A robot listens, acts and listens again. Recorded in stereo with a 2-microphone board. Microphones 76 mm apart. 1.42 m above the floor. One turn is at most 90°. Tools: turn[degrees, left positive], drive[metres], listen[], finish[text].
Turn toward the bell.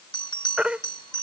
Action: turn[90]
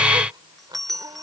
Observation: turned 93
Action: finish[Found it: a bell, straight ahead.]